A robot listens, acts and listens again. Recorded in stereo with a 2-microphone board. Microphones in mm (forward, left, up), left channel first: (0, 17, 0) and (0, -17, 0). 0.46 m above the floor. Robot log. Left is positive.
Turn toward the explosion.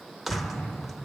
note: The explosion: about 60° left or 120° left.
cmd yaw +60
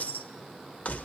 cmd idle
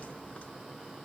end: I heard an explosion, but can't make it out now. It was about straight ahead or 60° left.